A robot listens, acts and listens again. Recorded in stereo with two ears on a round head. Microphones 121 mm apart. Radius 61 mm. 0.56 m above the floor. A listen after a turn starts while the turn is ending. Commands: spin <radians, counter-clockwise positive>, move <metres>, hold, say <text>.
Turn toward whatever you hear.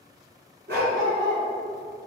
spin -1.31
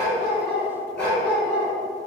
spin 0.17
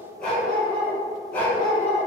spin 0.17
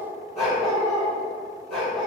say Found it: a dog barking, straight ahead, over 4 m away.